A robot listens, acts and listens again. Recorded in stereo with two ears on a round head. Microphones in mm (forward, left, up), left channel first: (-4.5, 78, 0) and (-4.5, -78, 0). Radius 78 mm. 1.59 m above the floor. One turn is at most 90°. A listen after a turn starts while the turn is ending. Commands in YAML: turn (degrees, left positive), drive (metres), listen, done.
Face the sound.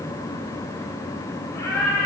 turn: 15
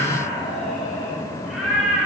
turn: -30
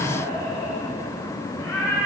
turn: 15
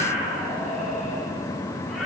done: "Found it: a cat meowing, straight ahead."